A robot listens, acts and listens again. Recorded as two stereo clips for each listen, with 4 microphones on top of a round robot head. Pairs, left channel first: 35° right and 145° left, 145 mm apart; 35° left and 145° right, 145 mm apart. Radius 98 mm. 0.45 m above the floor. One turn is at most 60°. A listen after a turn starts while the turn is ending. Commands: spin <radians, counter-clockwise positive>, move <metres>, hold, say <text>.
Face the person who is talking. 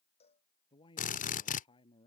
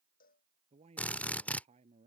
spin -1.05
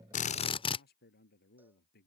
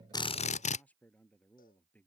spin -0.79
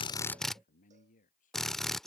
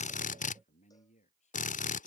say Facing the man speaking.